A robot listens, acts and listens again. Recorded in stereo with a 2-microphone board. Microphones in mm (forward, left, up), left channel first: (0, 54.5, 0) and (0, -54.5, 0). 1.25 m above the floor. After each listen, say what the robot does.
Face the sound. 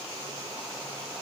Keep listening.
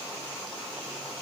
Keep listening.
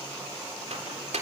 Turn 90° right.
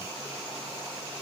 Keep listening.
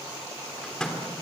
Found it: a microwave, straight ahead, 2 to 4 m away.